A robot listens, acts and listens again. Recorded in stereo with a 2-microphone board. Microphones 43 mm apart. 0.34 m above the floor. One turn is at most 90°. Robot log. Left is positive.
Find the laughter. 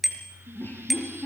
note: The laughter: about 55° left or 125° left.
cmd yaw +55
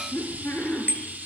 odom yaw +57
note: So it is at 65° left.
cmd yaw +65
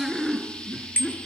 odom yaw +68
end: Facing the laughter.